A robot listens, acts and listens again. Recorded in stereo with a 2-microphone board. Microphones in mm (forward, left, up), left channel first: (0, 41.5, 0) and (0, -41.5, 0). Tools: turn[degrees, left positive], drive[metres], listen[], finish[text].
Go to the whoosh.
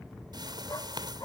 Thought: The whoosh: about 60° right or 120° right.
Action: turn[-60]
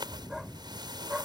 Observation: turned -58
Thought: So it is at 65° right.
Action: turn[-65]
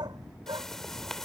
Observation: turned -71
Action: drive[1.0]
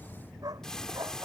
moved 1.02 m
Action: drive[1.0]
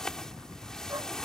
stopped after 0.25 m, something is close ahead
Action: finish[Something is in my way. I am facing the whoosh but have not reached it.]